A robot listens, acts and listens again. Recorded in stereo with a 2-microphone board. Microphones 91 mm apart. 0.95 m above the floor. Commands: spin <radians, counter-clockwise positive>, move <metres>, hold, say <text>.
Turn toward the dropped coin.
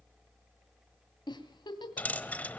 spin 0.26
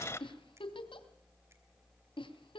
spin 2.62
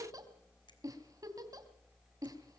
say Facing where the dropped coin came from. I can't hear it now.